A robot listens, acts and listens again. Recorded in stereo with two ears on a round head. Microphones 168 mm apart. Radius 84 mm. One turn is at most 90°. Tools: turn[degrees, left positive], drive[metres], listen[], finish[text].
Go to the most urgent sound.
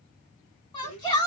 Thought: The shout: about 25° left or 155° left.
Action: turn[25]
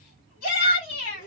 Thought: So it is at 130° left.
Action: turn[90]
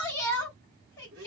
Thought: The shout is now 20° left.
Action: turn[20]
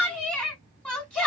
Action: drive[1.0]
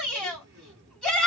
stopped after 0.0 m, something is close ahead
Action: finish[Blocked. The shout is further on, straight ahead.]